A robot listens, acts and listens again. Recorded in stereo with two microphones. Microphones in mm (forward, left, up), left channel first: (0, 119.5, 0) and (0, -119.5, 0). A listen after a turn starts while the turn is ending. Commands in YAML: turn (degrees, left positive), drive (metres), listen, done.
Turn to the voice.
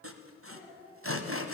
turn: -55
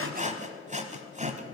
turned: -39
listen: true
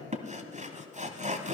listen: true
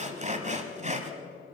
done: "I heard a child speaking, but can't make it out now. It was about 15° right or 85° right."